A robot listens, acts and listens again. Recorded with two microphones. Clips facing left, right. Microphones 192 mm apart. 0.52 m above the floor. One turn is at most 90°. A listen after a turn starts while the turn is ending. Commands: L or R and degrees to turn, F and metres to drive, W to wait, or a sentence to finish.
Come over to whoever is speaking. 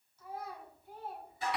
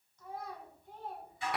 L30
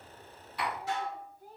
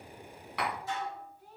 L90
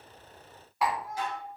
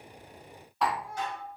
L45
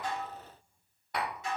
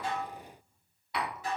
W
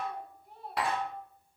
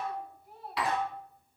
F1.0
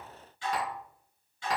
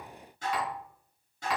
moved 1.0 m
W
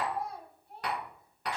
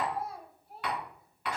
F1.0
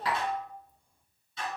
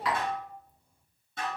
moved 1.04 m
F1.0
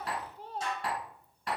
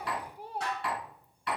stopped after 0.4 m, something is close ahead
R10
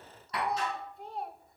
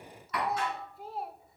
Arrived at the child speaking, straight ahead.